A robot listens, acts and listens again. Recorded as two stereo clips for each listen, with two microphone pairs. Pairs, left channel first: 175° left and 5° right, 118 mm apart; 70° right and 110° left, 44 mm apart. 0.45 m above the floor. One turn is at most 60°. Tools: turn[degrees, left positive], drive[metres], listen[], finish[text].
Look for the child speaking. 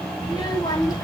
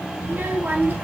Thought: The child speaking: 125° left.
Action: turn[60]
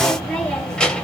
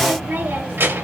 Thought: The child speaking is now 95° left.
Action: turn[60]
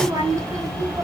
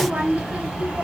Thought: The child speaking is now 50° left.
Action: turn[50]
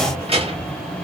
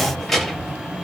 Thought: The child speaking is now 15° left.
Action: turn[15]
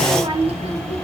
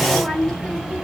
Action: finish[Found it: a child speaking, straight ahead.]